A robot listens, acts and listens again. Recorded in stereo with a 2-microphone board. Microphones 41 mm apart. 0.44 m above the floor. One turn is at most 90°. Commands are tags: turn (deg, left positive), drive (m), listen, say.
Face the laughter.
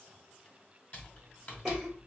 <turn deg="-30"/>
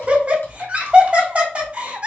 <turn deg="-90"/>
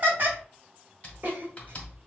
<turn deg="-65"/>
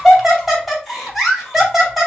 <say>Facing the laughter, 2 to 4 m away.</say>